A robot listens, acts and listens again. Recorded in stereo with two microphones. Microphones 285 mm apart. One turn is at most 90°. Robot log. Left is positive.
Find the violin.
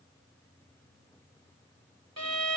note: The violin: about 60° right or 120° right.
cmd yaw -60
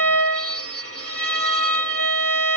note: So it is at 55° right.
cmd yaw -55
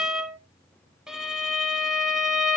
end: Found it: a violin, straight ahead.